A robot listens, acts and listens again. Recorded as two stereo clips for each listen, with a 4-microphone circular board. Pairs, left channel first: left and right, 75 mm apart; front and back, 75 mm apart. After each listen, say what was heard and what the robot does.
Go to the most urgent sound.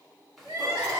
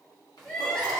The crying: 75° right. Turn 75° right.
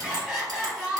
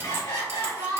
Drive 1.0 m forward.
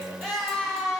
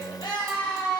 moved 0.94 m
Drive 1.0 m forward.
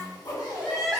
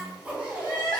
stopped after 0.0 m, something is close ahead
Arrived at the crying, straight ahead.